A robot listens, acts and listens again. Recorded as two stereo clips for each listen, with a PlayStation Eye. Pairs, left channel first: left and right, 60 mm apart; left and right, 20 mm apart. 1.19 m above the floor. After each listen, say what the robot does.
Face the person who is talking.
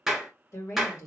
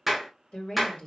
Turn 60° left.
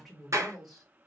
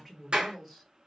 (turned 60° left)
Found it: a woman speaking, straight ahead.